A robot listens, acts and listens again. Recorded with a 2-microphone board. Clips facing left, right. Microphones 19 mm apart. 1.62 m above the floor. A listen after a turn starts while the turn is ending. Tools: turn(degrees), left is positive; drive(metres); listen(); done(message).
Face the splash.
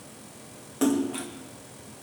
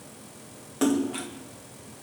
turn(degrees=-30)
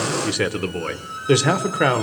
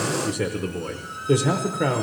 listen()
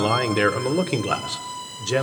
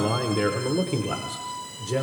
done("I heard a splash, but can't make it out now. It was about 20° left or 140° right.")